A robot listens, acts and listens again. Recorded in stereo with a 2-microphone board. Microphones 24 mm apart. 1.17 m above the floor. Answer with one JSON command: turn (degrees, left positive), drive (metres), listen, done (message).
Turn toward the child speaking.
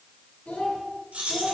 {"turn": 70}
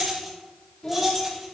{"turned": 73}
{"turn": 40}
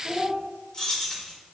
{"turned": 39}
{"done": "Facing the child speaking, 2 to 4 m away."}